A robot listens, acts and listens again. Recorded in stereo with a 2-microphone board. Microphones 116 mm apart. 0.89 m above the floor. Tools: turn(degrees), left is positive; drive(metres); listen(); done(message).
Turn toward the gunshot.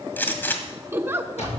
turn(degrees=15)
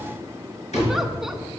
listen()
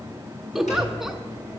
done("I heard a gunshot, but can't make it out now. It was about straight ahead or 150° left.")